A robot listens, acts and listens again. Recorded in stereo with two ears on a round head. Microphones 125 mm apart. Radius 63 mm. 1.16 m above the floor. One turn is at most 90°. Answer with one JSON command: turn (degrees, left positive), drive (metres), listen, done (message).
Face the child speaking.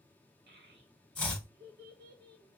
{"turn": -70}
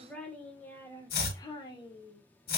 {"turn": 40}
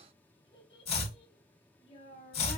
{"turn": 45}
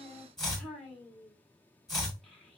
{"done": "Found it: a child speaking, straight ahead, 1 to 2 m away."}